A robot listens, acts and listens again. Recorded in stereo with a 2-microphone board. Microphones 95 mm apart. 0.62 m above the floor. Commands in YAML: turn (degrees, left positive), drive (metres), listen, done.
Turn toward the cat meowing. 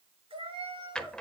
turn: -90
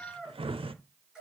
done: "Found it: a cat meowing, straight ahead, over 4 m away."